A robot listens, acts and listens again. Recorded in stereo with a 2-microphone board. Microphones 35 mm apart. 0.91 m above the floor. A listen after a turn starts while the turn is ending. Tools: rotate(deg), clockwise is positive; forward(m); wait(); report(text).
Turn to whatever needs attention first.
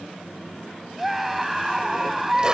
rotate(30)
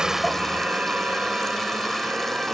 wait()
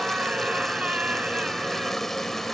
rotate(145)
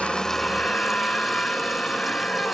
rotate(-30)
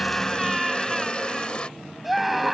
report("Facing the scream.")